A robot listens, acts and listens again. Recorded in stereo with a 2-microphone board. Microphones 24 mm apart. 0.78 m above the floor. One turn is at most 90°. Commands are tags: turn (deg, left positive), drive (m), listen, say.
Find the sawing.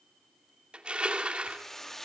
<listen/>
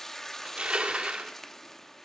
<listen/>
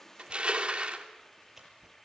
<turn deg="-20"/>
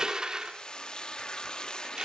<listen/>
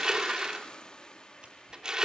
<listen/>
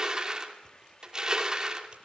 <say>I heard sawing, but can't make it out now. It was about straight ahead or 140° right.</say>